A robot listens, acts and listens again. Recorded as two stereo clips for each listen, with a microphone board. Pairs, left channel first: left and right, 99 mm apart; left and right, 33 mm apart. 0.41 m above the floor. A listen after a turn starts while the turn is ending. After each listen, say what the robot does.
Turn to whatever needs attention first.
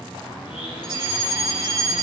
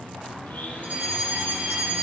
Turn 55° right.
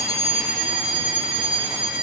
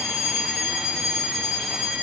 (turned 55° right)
Turn 10° right.
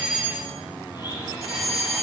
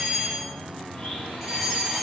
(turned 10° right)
Facing the fire alarm, 2 to 4 m away.